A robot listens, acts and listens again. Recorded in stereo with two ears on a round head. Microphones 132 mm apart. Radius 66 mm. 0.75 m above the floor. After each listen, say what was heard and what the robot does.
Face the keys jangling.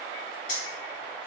The keys jangling: about 60° left or 120° left. Turn 60° left.
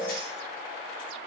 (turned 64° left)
Keep listening.
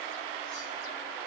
Keep listening.
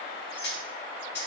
So it is at 75° left. Turn 75° left.
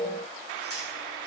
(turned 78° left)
Found it: keys jangling, straight ahead.